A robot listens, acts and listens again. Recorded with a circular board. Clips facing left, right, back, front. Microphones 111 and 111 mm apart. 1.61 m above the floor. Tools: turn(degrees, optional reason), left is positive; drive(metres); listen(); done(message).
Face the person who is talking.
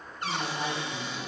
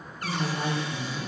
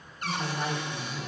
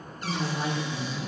turn(degrees=-60, reason="The woman speaking: 60° right.")
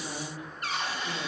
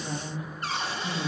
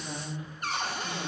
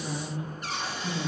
turn(degrees=-20, reason="The woman speaking is now 20° right.")
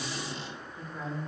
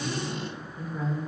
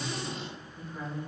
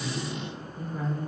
turn(degrees=-10, reason="The woman speaking is now 10° right.")
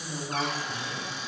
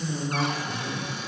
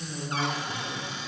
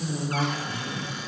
done("Found it: a woman speaking, straight ahead.")